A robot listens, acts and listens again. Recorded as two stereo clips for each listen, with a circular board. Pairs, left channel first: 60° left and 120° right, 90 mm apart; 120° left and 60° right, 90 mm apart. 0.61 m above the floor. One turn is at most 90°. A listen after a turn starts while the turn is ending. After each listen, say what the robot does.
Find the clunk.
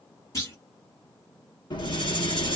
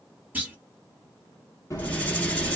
Turn 10° left.
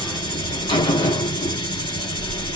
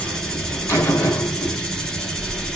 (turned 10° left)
I heard a clunk from this way, but can't make it out now.